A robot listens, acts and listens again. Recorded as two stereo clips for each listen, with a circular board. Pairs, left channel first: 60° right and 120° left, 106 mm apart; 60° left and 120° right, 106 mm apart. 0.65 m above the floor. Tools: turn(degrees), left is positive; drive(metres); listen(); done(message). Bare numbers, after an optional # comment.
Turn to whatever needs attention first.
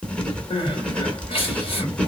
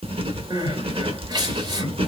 # The crying: 80° right.
turn(-80)
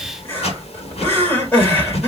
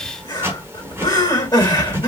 # The crying is now 10° left.
turn(10)
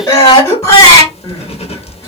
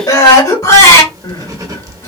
done("Facing the crying, 2 to 4 m away.")